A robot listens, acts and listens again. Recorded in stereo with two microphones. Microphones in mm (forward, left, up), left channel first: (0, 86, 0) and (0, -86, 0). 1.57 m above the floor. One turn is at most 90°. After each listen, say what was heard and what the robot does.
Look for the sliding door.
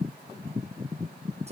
Keep listening.
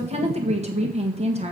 Keep listening.
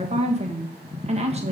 I can't make out a sliding door to turn to.